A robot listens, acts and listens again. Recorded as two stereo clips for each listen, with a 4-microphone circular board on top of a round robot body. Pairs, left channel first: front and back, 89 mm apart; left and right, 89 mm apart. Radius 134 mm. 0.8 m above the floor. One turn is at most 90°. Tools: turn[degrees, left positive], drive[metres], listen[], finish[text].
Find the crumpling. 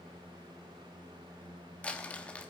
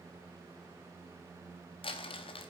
Thought: The crumpling: 75° left.
Action: turn[75]
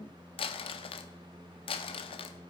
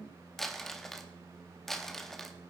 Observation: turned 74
Action: finish[Facing the crumpling.]